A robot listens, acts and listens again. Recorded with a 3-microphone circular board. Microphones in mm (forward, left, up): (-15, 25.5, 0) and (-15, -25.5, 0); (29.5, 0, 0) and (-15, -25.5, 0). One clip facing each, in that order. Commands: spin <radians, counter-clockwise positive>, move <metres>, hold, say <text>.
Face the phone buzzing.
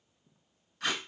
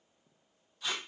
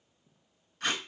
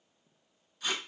hold
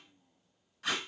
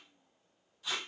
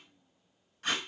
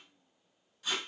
hold
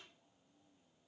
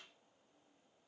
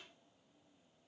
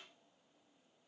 say I can't make out a phone buzzing, only tape being pulled.